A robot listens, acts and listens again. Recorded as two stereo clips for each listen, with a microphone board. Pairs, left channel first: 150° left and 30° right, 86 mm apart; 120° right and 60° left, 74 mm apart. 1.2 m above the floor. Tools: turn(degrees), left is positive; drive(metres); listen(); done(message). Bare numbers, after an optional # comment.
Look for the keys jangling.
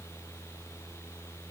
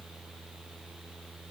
listen()
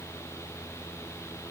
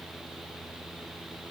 listen()
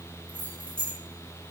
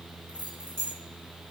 # The keys jangling: 95° right.
turn(-95)
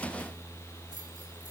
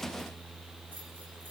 listen()
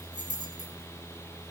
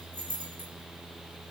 done("Facing the keys jangling.")